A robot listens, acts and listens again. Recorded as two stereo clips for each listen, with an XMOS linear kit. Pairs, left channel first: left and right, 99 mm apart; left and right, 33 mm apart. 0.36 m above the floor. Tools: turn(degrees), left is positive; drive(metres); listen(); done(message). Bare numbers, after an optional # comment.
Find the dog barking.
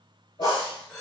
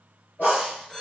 # The dog barking: about 65° left or 115° left.
turn(65)
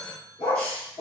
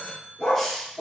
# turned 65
# So it is at 70° left.
turn(70)
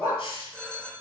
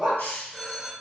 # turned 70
# The dog barking is now 20° right.
turn(-20)
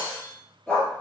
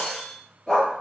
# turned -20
# The dog barking is now 10° left.
turn(10)
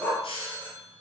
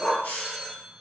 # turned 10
# The dog barking is now 10° left.
turn(10)
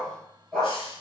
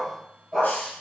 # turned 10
done("Found it: a dog barking, straight ahead, 2 to 4 m away.")